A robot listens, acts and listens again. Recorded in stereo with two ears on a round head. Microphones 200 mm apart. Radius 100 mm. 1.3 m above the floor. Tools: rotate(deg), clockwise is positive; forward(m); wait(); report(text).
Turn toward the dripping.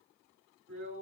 wait()
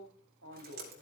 rotate(45)
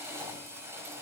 wait()
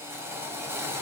wait()
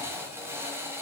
report("I heard dripping, but can't make it out now. It was about straight ahead or 90° right.")